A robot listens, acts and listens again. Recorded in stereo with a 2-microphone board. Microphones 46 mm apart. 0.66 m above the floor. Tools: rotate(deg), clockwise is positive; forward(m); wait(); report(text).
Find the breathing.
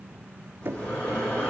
rotate(-35)
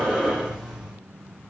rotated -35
report("Facing the breathing, over 4 m away.")